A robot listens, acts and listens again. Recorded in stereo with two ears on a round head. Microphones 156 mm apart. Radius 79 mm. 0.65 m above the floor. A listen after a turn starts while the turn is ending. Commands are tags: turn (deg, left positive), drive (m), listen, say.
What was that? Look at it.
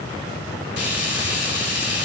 <turn deg="70"/>
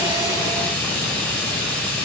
<turn deg="15"/>
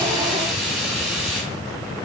<say>Facing the frying, 2 to 4 m away.</say>